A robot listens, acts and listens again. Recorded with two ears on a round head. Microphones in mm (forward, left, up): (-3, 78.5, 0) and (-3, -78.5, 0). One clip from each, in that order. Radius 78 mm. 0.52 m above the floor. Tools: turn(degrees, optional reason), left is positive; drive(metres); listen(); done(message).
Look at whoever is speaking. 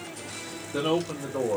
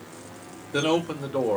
turn(degrees=-45, reason="The man speaking: about 45° right or 135° right.")
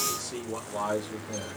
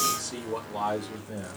done("Found it: a man speaking, straight ahead.")